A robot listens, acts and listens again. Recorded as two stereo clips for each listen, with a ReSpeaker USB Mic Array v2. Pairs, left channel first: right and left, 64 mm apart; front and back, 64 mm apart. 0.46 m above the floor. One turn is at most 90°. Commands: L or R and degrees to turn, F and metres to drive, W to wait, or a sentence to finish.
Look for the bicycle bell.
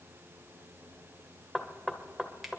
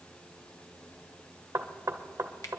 W
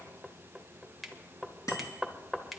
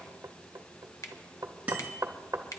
R90
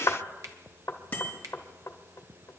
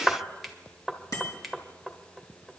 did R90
R30
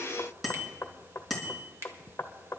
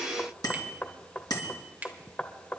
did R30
Found it: a bicycle bell, straight ahead, 2 to 4 m away.